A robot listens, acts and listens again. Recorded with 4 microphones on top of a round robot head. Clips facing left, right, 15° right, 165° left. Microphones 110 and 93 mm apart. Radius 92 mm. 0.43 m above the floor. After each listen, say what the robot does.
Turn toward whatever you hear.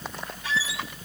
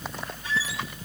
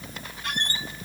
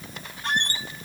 Turn 110° left.
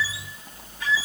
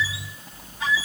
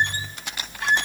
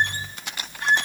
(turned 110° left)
Turn 15° right.
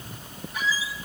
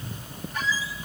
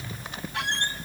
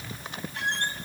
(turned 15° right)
Found it: a squeak, straight ahead, under 1 m away.